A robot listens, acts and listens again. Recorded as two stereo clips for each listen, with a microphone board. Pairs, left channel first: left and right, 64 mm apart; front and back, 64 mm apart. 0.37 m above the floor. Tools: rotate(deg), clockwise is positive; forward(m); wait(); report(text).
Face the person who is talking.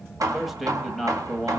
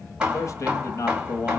report("Facing the man speaking.")